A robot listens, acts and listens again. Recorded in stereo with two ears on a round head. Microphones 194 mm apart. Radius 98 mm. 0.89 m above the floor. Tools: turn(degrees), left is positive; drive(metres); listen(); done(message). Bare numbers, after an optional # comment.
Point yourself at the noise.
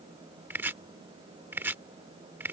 turn(-30)
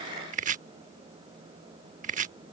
# So it is at 135° right.
turn(-135)
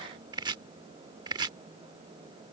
# The chopping is now 20° right.
turn(-20)
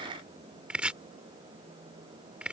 done("Found it: chopping, straight ahead.")